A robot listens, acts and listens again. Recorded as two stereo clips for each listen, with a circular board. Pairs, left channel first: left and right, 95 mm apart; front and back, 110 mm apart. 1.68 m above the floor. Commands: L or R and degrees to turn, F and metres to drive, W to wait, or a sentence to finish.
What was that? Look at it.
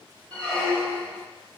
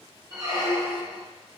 L165
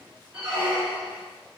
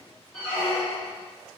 R20
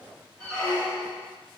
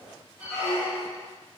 Found it: a squeak, straight ahead, 1 to 2 m away.